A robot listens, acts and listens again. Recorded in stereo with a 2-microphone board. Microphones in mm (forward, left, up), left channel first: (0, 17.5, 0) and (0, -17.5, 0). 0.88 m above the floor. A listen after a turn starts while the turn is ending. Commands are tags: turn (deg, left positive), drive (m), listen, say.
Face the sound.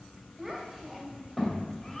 <turn deg="30"/>
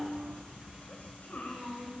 <turn deg="120"/>
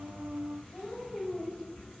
<turn deg="25"/>
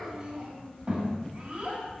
<turn deg="-30"/>
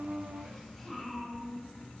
<turn deg="10"/>
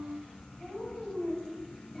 <say>Found it: a child speaking, straight ahead.</say>